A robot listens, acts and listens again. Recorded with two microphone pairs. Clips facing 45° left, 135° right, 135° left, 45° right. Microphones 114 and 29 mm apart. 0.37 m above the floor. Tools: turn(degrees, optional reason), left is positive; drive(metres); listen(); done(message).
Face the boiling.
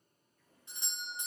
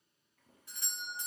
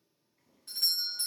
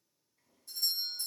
turn(degrees=-145, reason="The boiling: 145° right.")
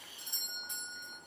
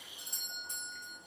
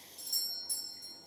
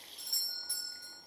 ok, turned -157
turn(degrees=15, reason="The boiling is now 15° left.")
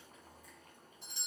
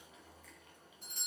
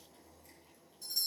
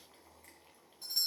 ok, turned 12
done("Facing the boiling.")